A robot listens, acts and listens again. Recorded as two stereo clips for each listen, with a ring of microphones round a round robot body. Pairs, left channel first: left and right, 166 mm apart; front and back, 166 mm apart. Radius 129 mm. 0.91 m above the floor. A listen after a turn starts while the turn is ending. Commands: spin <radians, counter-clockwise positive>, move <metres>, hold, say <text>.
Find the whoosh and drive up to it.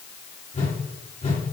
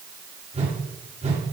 spin 2.36
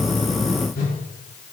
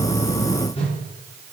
spin 0.96
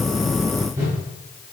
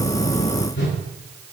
spin -0.35
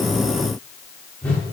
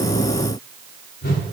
spin 0.17
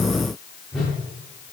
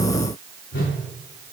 move 1.0
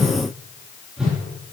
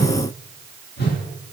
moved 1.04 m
move 1.0
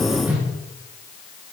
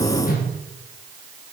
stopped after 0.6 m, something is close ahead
spin -0.26
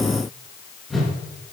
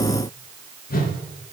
say Arrived at the whoosh, straight ahead.